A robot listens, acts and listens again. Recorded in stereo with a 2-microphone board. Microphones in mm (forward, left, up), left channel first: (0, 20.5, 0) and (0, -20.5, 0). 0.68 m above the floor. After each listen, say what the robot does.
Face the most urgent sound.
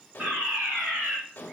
Turn 40° right.
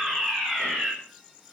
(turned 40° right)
Facing the fire alarm, over 4 m away.